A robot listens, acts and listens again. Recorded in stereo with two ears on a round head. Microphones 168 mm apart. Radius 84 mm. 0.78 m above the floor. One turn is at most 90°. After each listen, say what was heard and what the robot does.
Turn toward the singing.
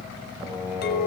Turn 30° right.
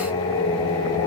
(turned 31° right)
So it is at 20° left. Turn 20° left.
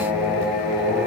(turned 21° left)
Facing the singing, over 4 m away.